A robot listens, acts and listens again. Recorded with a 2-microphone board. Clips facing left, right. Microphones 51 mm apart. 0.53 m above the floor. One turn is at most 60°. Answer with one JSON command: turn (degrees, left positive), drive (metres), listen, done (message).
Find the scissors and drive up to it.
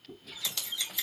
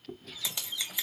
{"turn": -15}
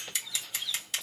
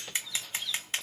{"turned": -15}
{"turn": -60}
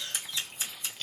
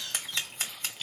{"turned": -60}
{"turn": -60}
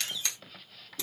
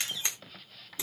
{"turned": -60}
{"turn": -25}
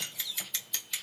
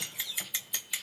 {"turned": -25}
{"turn": -20}
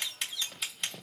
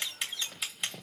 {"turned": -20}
{"drive": 1.0}
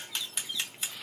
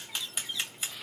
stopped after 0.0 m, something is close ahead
{"done": "Blocked. The scissors is further on, straight ahead."}